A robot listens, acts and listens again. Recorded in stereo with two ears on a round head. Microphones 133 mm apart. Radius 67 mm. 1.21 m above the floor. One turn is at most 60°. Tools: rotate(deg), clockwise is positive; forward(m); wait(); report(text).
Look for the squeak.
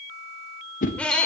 rotate(-30)
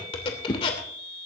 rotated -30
rotate(-60)
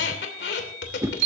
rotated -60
rotate(-60)
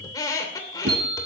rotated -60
rotate(-25)
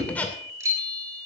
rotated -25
rotate(-10)
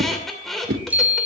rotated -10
report("Facing the squeak.")